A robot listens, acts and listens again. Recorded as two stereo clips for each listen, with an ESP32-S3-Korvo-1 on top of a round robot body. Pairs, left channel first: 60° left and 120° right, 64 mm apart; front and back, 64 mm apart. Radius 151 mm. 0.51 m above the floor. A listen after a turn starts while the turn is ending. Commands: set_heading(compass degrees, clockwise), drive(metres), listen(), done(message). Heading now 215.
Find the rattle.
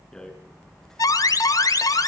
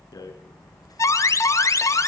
set_heading(235)
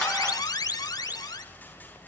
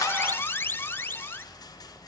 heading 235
listen()
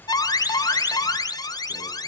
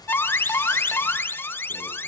listen()
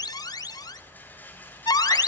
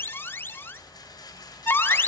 done("Facing the rattle.")